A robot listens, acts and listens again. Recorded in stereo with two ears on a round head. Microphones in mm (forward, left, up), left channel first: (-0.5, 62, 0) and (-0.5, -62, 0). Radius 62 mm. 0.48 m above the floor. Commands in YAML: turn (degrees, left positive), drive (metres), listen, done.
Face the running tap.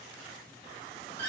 listen: true
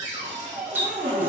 turn: -30
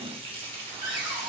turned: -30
turn: -135
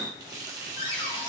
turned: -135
turn: -30
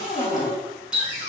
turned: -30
turn: -10
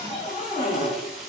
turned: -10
listen: true
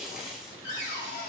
done: "Found it: a running tap, straight ahead."